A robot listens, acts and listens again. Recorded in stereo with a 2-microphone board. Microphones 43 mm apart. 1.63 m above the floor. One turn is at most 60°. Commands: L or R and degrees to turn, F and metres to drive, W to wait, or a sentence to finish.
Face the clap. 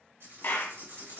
L55
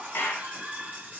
L60
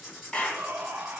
L30
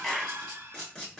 Found it: a clap, straight ahead.